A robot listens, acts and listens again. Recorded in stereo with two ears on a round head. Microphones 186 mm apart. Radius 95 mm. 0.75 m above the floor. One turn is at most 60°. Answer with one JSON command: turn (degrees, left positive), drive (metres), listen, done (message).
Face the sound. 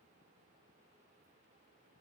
{"listen": true}
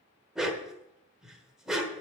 {"turn": -30}
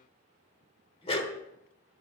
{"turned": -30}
{"turn": 25}
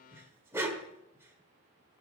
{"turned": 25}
{"turn": -10}
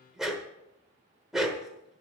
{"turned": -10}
{"done": "Found it: a dog barking, straight ahead."}